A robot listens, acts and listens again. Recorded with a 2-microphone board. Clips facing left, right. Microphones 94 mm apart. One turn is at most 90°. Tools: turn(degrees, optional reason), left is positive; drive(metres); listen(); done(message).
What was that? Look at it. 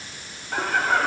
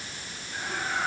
turn(degrees=90)
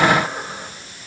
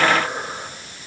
turn(degrees=-10, reason="So it is at 10° right.")
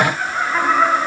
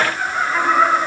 done("Found it: laughter, straight ahead, over 4 m away.")